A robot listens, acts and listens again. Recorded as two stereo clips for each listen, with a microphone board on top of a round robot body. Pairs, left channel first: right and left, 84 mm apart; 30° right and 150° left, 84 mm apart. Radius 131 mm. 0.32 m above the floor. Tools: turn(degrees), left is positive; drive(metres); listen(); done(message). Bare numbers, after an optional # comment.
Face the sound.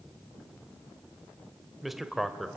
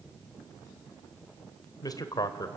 done("Found it: a man speaking, straight ahead.")